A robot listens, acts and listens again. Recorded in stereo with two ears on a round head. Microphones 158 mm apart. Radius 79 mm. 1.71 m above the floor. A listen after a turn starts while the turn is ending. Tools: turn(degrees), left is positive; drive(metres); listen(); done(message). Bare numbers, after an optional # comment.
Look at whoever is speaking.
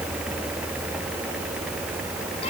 listen()
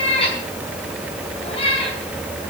listen()
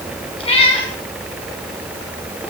done("I can't make out anyone speaking to turn to.")